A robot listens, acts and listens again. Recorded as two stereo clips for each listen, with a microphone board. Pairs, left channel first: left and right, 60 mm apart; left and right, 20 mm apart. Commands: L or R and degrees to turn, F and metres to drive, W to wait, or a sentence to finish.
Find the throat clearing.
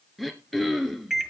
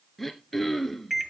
L30
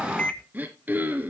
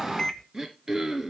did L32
R30
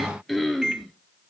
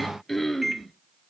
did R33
Facing the throat clearing, 1 to 2 m away.